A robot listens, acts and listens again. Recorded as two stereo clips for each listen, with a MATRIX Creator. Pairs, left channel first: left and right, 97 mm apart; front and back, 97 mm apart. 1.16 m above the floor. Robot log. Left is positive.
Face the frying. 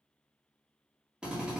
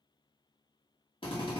cmd idle
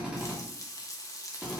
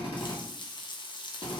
note: The frying: 35° left.
cmd yaw +35
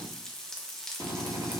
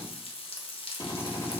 end: Found it: frying, straight ahead, under 1 m away.